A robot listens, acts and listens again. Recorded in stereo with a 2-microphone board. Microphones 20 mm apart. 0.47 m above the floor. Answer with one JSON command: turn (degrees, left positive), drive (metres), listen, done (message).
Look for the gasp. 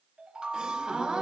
{"turn": -55}
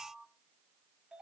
{"listen": true}
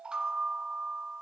{"done": "I heard a gasp, but can't make it out now. It was about straight ahead or 70° right."}